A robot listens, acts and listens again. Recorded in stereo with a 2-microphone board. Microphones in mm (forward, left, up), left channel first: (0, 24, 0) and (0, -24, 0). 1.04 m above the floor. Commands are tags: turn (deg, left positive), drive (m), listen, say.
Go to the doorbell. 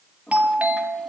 <turn deg="-30"/>
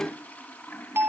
<turn deg="-120"/>
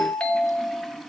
<turn deg="25"/>
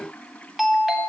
<drive m="1.0"/>
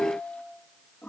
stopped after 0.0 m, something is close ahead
<say>Blocked. The doorbell is further on, straight ahead.</say>